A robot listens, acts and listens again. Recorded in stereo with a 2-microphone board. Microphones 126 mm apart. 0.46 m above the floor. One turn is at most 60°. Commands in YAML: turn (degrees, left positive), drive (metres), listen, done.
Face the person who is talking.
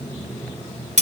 listen: true
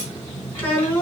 turn: 15
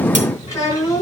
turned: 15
turn: 60
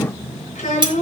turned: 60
turn: 60
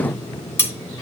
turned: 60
turn: 35
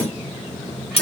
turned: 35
listen: true
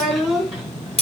done: "Found it: a child speaking, straight ahead."